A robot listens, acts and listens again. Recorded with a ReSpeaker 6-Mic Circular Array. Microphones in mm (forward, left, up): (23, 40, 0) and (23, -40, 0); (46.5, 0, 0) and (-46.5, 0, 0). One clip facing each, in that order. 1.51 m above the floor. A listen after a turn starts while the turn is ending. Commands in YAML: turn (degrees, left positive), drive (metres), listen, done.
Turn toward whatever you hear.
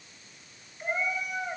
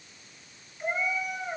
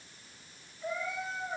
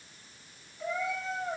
turn: 180
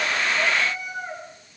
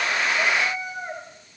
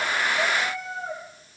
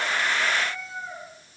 turn: -25
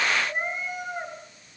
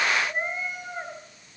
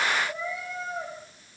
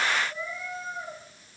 done: "Found it: a cat meowing, straight ahead, over 4 m away."